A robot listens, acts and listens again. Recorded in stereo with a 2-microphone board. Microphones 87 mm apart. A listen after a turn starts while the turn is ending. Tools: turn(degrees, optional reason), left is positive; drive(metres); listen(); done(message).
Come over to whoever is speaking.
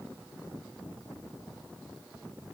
listen()
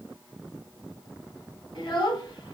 turn(degrees=60, reason="The child speaking: about 60° left or 120° left.")
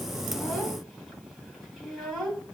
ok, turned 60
drive(metres=1.0)
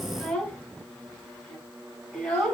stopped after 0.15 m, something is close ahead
done("Blocked. The child speaking is further on, straight ahead.")